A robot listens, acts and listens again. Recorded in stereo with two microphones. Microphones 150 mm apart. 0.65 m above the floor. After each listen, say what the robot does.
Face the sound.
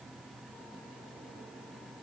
Keep listening.
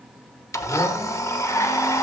Turn 20° left.
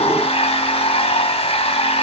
Turn 140° left.
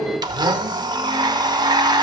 Turn 25° right.
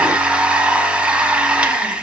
Facing the blender, under 1 m away.